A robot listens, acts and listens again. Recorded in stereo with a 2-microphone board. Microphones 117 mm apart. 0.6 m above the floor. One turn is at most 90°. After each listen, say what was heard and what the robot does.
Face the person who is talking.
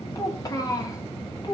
The child speaking: about 35° left or 145° left. Turn 35° left.
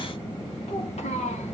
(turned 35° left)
Keep listening.
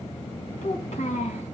So it is at 100° left. Turn 90° left.
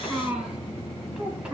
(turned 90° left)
Found it: a child speaking, straight ahead, over 4 m away.